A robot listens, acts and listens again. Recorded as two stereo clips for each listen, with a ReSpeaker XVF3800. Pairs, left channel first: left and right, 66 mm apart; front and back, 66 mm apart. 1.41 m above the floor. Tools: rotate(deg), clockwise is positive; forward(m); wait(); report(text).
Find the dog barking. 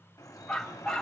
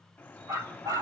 rotate(-170)
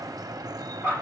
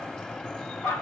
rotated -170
rotate(-45)
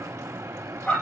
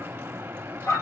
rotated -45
rotate(-20)
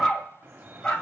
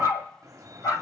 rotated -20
rotate(-15)
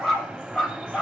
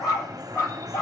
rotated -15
rotate(-10)
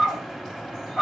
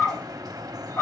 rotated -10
report("Found it: a dog barking, straight ahead, 2 to 4 m away.")